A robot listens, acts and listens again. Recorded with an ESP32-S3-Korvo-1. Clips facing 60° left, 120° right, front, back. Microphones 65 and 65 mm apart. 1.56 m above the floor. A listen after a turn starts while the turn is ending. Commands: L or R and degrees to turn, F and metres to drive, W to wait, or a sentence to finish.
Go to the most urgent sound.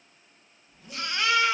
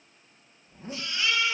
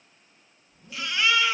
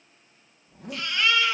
L85
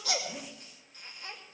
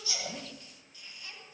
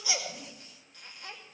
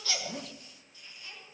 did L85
W
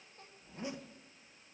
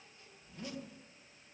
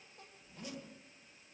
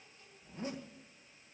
W
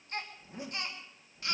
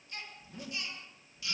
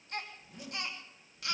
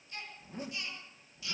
L25
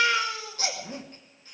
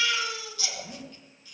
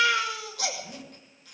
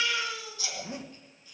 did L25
L15
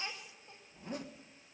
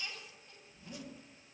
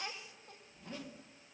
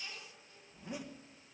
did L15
W
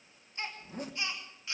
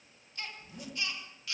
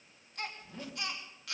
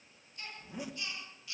F1.0
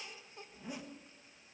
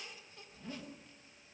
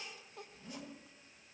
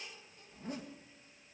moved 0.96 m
W
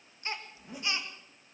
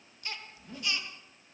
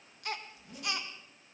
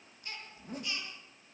F1.0
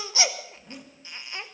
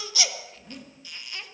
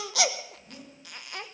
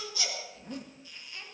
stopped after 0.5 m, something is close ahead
Arrived at the baby crying, straight ahead.